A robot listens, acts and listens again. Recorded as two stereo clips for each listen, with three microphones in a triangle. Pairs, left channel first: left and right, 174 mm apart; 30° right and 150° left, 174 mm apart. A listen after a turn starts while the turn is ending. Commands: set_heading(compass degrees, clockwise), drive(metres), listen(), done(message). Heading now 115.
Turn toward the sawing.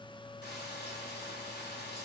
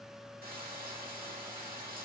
listen()
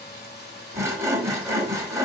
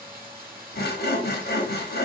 set_heading(130)
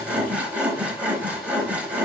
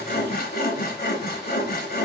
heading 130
done("Found it: sawing, straight ahead.")